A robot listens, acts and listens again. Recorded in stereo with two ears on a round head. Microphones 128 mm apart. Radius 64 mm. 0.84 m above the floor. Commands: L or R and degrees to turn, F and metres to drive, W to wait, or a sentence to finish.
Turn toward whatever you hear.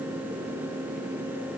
W
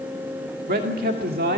R70
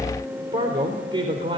R35
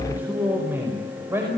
R15
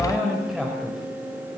Found it: a man speaking, straight ahead.